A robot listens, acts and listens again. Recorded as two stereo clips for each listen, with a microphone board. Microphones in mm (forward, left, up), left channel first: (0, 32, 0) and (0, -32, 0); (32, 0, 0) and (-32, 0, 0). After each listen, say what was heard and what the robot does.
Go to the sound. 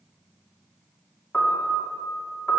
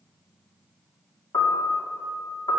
The piano: 15° left. Turn 15° left.
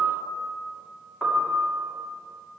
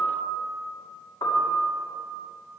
Drive 1.0 m forward.
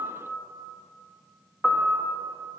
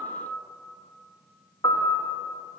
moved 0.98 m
Drive 1.0 m forward.
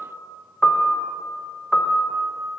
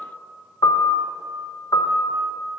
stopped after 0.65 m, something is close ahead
I am next to the piano.